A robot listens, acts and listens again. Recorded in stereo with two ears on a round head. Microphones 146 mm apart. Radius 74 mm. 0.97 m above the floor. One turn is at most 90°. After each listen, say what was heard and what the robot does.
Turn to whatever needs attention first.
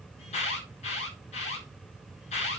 The alarm: about 40° left or 140° left. Turn 40° left.
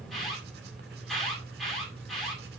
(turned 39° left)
Found it: an alarm, straight ahead.